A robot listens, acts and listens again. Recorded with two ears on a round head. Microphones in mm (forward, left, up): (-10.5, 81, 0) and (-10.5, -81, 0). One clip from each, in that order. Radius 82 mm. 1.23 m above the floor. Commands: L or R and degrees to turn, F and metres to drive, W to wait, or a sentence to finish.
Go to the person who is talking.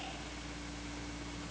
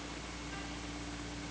W
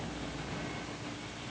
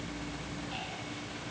W
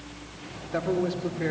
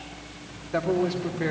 R15
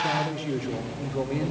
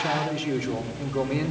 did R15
R150
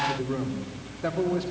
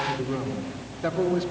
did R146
F1.0
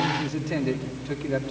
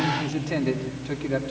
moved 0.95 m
F1.0
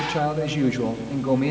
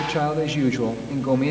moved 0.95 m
F1.0
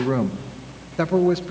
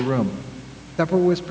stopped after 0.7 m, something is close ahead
I am next to the man speaking.